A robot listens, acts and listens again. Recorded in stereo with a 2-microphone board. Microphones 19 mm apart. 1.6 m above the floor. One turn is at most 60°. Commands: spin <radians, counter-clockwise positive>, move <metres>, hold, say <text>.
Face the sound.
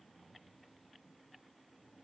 hold
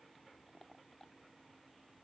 hold
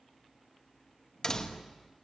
spin 0.61
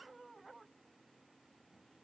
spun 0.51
hold
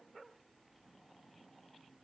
say I heard a door slam, but can't make it out now. It was about 10° left or 115° left.